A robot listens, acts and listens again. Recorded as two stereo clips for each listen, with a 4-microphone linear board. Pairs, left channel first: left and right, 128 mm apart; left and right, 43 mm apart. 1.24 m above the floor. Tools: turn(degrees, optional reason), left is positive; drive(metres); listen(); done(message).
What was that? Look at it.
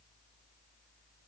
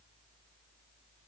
listen()
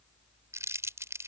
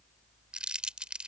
turn(degrees=-20, reason="The crumpling: about 20° right or 160° right.")
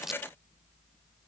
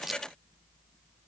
done("Facing the crumpling.")